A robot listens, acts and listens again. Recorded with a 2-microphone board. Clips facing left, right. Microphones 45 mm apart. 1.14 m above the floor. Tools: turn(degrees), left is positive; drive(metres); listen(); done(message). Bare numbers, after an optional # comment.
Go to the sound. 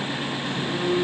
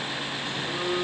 turn(-30)
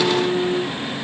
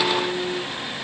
# So it is at 30° left.
turn(30)
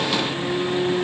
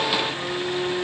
# The phone buzzing is now 15° right.
turn(-15)
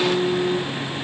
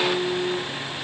drive(1.0)
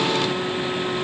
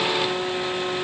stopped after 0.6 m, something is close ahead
done("Blocked. The phone buzzing is further on, straight ahead.")